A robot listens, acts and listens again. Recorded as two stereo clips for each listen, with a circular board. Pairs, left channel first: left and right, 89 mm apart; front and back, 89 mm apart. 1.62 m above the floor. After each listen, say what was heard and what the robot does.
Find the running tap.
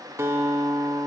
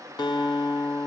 Keep listening.
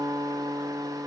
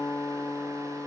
Keep listening.
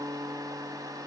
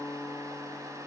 I can't make out a running tap, only a guitar.